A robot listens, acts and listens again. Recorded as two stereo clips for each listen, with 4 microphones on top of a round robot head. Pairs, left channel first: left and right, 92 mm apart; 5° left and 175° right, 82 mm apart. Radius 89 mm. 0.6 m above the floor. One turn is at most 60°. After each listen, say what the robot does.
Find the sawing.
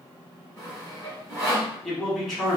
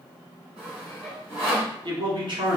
Turn 60° right.
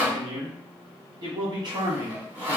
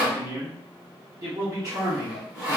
Turn 60° right.
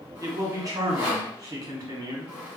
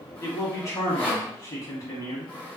Turn 10° right.
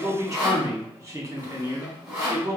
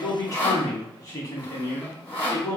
Found it: sawing, straight ahead.